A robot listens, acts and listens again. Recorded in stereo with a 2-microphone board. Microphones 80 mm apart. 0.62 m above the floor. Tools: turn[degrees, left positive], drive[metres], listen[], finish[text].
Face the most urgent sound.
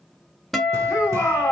Thought: The shout: about 25° left or 155° left.
Action: turn[25]
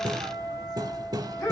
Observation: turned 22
Thought: So it is at 125° left.
Action: turn[125]
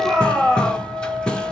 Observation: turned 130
Action: finish[Facing the shout.]